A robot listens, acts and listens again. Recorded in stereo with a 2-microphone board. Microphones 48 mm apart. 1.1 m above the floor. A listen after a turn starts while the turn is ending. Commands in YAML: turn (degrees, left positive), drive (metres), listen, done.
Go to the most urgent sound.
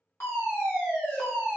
turn: 60
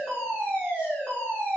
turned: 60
turn: 45
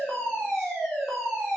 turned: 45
drive: 1.0
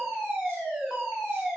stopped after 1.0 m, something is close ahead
turn: -10
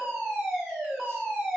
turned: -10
done: "I am next to the fire alarm."